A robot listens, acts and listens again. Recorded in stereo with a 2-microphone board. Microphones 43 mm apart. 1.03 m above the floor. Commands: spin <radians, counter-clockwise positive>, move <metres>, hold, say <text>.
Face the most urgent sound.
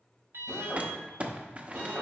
spin -1.57
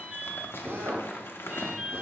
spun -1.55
spin -0.26
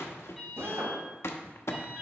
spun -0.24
say Found it: an alarm, straight ahead, 2 to 4 m away.